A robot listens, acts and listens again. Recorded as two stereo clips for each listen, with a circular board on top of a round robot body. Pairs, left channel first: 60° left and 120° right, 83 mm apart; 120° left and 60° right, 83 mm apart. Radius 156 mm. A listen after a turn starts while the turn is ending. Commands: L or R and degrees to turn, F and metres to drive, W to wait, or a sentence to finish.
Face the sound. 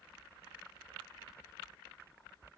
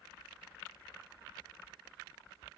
W
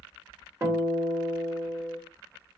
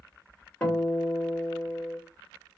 R170
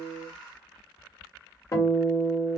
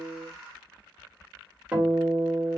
L10
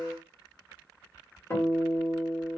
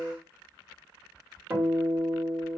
Facing the guitar, 1 to 2 m away.